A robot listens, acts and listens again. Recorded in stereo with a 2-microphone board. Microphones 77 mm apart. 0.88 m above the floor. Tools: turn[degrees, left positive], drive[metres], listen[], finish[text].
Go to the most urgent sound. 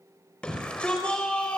Action: turn[30]
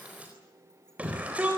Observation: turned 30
Thought: So it is at 20° right.
Action: turn[-20]
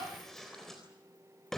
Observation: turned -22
Action: drive[1.0]
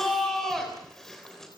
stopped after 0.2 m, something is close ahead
Action: finish[Blocked. The shout is further on, straight ahead.]